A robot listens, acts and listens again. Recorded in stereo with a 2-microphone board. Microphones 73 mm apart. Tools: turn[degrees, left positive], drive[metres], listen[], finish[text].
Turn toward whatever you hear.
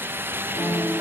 Thought: The piano: about 65° left or 115° left.
Action: turn[65]
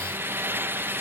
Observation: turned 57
Action: listen[]
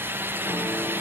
Action: listen[]
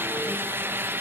Action: finish[I heard a piano, but can't make it out now. It was about 5° left or 60° left.]